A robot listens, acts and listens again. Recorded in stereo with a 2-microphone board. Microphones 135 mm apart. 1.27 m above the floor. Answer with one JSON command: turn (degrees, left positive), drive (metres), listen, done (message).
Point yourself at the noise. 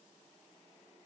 {"listen": true}
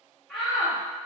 {"turn": 30}
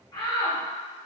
{"turn": 150}
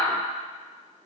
{"turn": 35}
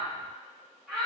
{"done": "Found it: a shout, straight ahead."}